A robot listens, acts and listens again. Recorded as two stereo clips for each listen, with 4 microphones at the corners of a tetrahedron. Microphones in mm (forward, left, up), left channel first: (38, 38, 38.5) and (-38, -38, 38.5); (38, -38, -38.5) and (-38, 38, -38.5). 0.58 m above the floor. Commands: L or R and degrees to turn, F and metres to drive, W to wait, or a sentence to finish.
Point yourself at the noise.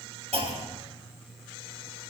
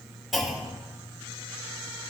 R135
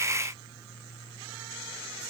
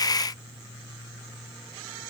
I heard a clunk from this way, but can't make it out now.